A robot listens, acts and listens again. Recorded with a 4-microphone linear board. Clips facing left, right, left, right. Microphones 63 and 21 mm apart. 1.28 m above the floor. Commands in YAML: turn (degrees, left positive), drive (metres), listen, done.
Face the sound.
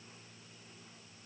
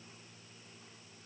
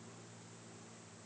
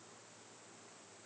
listen: true
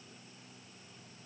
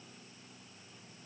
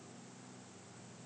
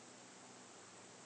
listen: true
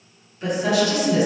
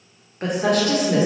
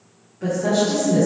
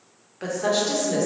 turn: -40
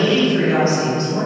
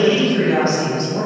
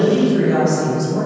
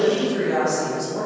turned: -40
turn: 25
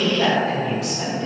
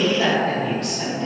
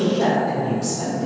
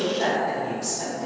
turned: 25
turn: 10
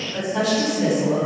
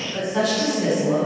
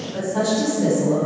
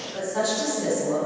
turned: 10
done: "Found it: a woman speaking, straight ahead, 2 to 4 m away."